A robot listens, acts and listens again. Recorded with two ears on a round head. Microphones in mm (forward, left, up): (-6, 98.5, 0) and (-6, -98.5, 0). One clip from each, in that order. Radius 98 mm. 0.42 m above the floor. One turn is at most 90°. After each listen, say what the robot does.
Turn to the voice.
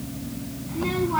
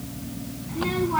Turn 30° right.
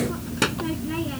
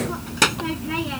Turn 90° right.
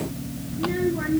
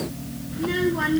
Turn 75° right.
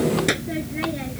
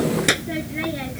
Turn 25° right.
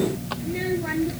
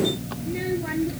Turn 10° left.
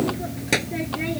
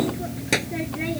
Found it: a child speaking, straight ahead.